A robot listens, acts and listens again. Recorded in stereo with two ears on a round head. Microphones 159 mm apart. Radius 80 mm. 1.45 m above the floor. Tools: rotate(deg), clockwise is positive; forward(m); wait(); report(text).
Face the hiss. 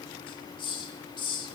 rotate(-30)
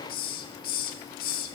rotate(-120)
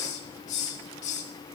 rotate(-45)
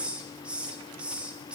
report("Found it: a hiss, straight ahead, 1 to 2 m away.")